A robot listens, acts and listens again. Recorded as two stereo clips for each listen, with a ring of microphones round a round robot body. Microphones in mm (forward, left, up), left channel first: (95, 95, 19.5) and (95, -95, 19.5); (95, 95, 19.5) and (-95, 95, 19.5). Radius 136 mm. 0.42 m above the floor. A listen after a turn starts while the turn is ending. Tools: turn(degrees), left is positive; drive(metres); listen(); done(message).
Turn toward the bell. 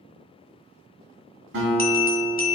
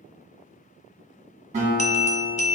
turn(degrees=50)
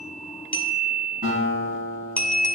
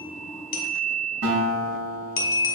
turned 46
done("Facing the bell.")